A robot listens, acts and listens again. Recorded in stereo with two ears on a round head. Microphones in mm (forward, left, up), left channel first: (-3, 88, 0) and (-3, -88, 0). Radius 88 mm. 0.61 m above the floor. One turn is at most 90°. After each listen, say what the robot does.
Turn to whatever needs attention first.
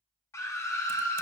Turn 15° left.
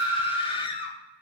Turn 90° left.
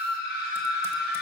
Turn 65° left.
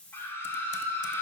Turn 15° left.
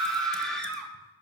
Facing the scream, 1 to 2 m away.